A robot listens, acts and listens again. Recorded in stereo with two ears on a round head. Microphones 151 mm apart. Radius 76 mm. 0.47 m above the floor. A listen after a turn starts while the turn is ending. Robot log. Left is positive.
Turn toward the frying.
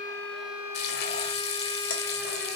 note: The frying: about 65° left or 115° left.
cmd yaw +65
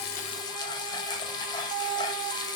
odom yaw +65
note: So it is at 30° left.
cmd yaw +30
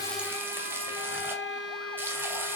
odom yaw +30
note: The frying is now 15° right.
cmd yaw -15
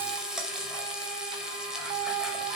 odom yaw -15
end: Found it: frying, straight ahead.